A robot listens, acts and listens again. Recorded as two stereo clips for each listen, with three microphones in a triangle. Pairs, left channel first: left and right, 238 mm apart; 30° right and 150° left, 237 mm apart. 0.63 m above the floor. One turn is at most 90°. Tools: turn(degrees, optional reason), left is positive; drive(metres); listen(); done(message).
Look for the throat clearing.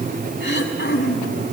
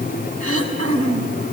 turn(degrees=90, reason="The throat clearing: 135° left.")
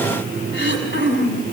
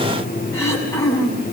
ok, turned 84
turn(degrees=50, reason="The throat clearing is now 50° left.")
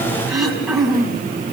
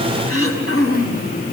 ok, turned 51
done("Facing the throat clearing.")